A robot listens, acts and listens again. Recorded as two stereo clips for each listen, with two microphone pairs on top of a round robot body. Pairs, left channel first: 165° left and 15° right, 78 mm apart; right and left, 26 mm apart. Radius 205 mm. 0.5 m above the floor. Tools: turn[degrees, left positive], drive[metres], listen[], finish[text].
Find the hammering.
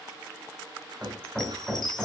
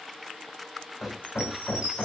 Thought: The hammering: 105° right.
Action: turn[-105]
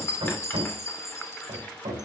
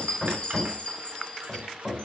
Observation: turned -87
Thought: The hammering is now 20° right.
Action: turn[-20]
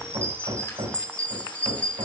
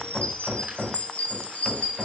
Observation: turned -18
Action: finish[Found it: hammering, straight ahead, over 4 m away.]